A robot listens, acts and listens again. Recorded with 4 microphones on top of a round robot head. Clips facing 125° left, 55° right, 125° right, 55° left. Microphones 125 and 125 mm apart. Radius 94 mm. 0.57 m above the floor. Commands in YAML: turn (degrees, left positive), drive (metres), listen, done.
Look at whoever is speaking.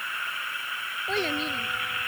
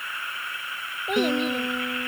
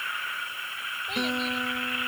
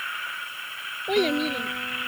turn: 20
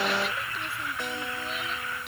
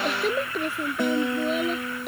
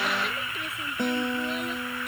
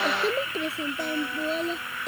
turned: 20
done: "Found it: a child speaking, straight ahead."